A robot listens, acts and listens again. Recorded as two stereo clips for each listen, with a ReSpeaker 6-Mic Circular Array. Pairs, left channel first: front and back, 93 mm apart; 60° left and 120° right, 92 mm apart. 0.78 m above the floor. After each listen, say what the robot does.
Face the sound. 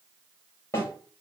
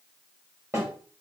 Turn 60° right.
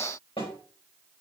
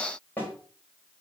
Turn 10° right.
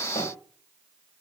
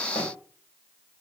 Keep listening.
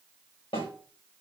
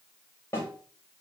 Found it: a snare drum, straight ahead, 2 to 4 m away.